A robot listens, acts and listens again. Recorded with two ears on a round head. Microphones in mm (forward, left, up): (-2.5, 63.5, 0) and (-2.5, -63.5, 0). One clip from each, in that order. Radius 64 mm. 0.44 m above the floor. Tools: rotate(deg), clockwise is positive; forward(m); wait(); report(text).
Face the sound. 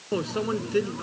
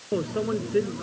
rotate(-90)
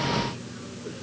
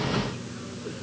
report("Facing the microwave.")